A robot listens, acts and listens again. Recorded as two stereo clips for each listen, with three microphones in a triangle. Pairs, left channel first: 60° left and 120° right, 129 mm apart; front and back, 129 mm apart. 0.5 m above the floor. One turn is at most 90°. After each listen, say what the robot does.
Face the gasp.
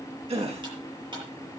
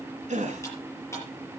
Turn 90° right.
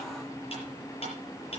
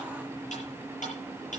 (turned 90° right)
Turn 70° right.
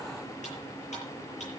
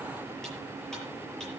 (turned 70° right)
Facing where the gasp came from. I can't hear it now.